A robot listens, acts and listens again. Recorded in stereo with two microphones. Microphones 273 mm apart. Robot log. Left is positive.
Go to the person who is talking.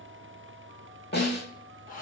cmd idle
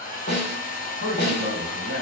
note: The man speaking: about 40° right or 140° right.
cmd yaw -40
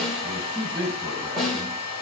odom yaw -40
cmd fwd 1.0
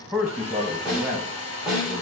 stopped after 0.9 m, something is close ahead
end: Arrived at the man speaking, straight ahead.